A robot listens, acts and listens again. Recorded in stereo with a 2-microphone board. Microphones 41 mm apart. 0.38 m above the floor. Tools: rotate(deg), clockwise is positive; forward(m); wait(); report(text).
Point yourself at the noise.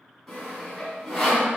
rotate(-30)
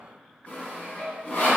rotate(-140)
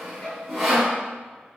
report("Found it: sawing, straight ahead.")